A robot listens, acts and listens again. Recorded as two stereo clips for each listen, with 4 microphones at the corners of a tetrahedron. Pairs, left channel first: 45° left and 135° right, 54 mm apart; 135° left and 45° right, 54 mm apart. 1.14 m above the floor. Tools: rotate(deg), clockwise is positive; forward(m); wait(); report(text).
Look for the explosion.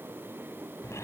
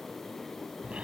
wait()
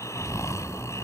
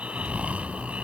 rotate(50)
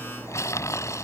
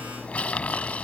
report("I heard an explosion from this way, but can't make it out now.")